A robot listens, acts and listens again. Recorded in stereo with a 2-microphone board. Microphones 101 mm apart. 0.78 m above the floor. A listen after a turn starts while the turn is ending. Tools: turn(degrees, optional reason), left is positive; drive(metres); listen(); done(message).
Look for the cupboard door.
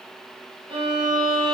listen()
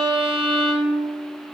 listen()
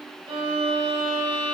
done("I can't make out a cupboard door, only a violin.")